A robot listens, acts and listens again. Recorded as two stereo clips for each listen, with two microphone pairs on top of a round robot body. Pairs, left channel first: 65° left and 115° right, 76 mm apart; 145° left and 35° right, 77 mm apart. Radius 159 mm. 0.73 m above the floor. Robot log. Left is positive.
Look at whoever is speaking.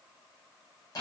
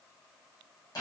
cmd idle
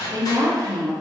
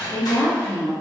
note: The woman speaking: 150° right.
cmd yaw -150
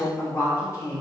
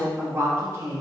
note: The woman speaking is now 15° left.
cmd yaw +15
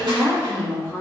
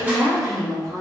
end: Facing the woman speaking, under 1 m away.